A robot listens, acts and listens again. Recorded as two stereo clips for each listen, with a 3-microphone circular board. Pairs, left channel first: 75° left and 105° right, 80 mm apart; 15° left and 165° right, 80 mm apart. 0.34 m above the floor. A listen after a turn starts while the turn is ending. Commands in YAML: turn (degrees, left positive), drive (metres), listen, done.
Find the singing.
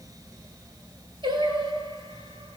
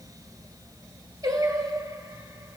turn: -120
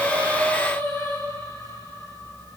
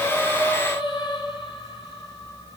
turn: 15
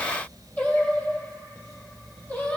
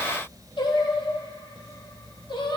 done: "Found it: singing, straight ahead, over 4 m away."